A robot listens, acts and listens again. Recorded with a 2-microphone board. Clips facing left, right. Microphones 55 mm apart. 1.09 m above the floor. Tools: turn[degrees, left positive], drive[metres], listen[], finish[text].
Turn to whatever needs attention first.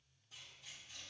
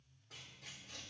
Action: listen[]
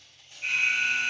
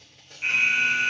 Thought: The alarm: about 35° right or 145° right.
Action: turn[-35]
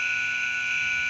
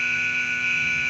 Thought: So it is at 110° right.
Action: turn[-110]
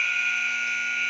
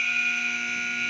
Thought: The alarm is now 25° left.
Action: turn[25]
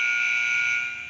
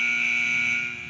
Thought: The alarm is now 10° right.
Action: turn[-10]
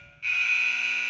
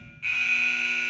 Action: finish[Found it: an alarm, straight ahead.]